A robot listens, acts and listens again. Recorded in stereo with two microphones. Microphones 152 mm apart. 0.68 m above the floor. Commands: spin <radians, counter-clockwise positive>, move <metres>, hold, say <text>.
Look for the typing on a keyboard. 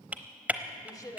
spin -0.52
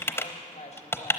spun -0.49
spin 0.35
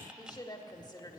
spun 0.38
hold
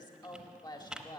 say Facing the typing on a keyboard, under 1 m away.